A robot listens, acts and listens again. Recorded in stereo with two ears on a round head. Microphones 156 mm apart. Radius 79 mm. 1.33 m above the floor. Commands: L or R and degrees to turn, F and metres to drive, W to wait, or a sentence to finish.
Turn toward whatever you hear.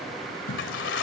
L75
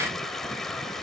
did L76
Found it: a toilet flushing, straight ahead.